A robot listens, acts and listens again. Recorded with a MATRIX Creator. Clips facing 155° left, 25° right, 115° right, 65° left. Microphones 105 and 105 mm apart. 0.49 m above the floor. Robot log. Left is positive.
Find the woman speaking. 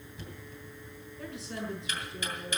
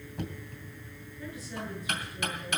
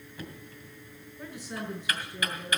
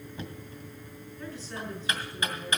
note: The woman speaking: 170° left.
cmd yaw +170
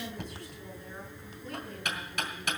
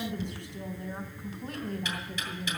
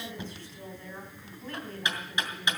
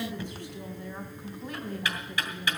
end: Facing the woman speaking.